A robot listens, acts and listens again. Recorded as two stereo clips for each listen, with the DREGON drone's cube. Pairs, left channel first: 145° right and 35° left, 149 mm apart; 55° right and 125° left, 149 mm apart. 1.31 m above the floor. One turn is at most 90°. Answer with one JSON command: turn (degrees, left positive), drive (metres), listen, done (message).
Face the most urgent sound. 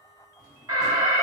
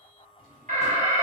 {"turn": 90}
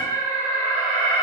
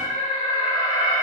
{"done": "Facing the alarm."}